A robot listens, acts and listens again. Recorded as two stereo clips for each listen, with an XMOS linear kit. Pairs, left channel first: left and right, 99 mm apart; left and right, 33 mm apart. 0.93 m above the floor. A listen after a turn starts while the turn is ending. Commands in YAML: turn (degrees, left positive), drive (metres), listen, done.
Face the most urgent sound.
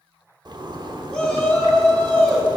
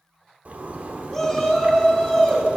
turn: 30
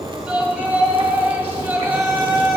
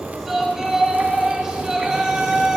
turn: -25
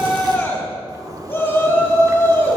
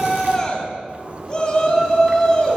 turn: 20
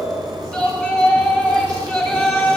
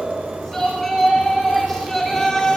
done: "Found it: a shout, straight ahead."